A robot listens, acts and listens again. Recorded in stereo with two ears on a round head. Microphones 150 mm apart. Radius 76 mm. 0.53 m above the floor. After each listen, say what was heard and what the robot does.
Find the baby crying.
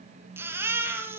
Turn 30° right.
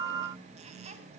Keep listening.
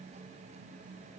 Keep listening.
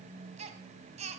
So it is at 140° right. Turn 140° right.
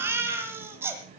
The baby crying is now 15° right. Turn 15° right.
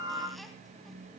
Keep listening.
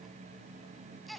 Found it: a baby crying, straight ahead.